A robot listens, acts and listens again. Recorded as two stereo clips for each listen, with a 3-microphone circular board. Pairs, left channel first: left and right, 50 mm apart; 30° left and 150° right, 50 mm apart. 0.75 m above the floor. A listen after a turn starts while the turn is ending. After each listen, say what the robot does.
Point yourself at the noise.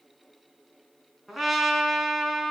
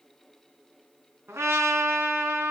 Turn 175° right.
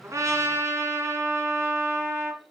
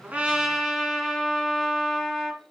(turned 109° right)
Turn 65° right.
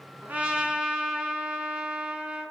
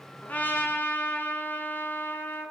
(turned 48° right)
Turn 15° right.
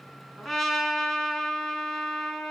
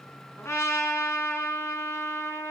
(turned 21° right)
Found it: a trumpet, straight ahead.